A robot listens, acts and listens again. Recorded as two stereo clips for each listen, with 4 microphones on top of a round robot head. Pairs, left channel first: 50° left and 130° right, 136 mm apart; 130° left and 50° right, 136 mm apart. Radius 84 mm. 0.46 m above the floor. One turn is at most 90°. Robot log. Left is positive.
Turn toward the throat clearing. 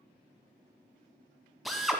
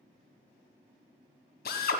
cmd idle
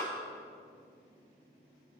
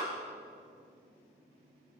cmd idle
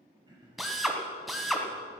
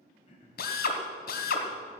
note: The throat clearing: 175° left.
cmd yaw +90
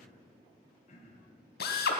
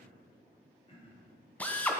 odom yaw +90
note: The throat clearing is now 80° left.
cmd yaw +80
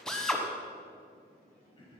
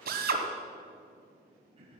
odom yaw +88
end: Found it: throat clearing, straight ahead.